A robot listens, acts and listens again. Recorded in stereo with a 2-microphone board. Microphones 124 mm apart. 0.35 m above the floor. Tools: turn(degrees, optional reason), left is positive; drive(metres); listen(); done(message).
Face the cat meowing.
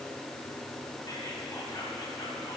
listen()
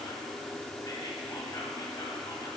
listen()
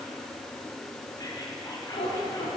turn(degrees=55, reason="The cat meowing: about 55° left or 125° left.")
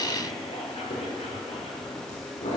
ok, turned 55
turn(degrees=70, reason="So it is at 70° left.")
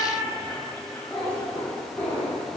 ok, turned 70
turn(degrees=15, reason="The cat meowing is now 15° left.")
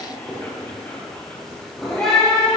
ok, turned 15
done("Found it: a cat meowing, straight ahead, over 4 m away.")